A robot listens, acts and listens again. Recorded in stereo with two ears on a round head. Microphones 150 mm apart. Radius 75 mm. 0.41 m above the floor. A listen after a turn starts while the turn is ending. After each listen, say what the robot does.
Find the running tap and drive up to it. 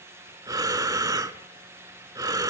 Keep listening.
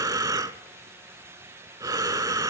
Keep listening.
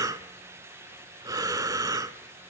I can't make out a running tap to turn to.